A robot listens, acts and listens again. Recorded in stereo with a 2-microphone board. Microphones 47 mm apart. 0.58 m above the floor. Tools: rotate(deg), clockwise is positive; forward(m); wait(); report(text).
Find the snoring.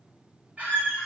wait()
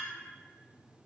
wait()
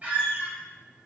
report("I can't make out snoring to turn to.")